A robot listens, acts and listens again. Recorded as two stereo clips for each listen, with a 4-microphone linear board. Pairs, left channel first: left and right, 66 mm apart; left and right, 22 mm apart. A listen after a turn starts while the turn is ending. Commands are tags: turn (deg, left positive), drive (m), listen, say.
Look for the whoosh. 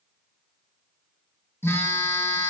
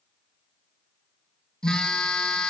<listen/>
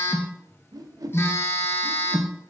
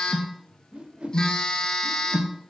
<turn deg="-65"/>
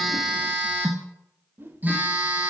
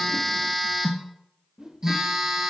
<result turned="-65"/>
<turn deg="-35"/>
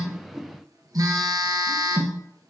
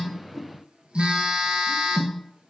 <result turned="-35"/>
<listen/>
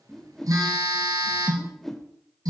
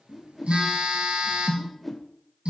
<say>Facing the whoosh, under 1 m away.</say>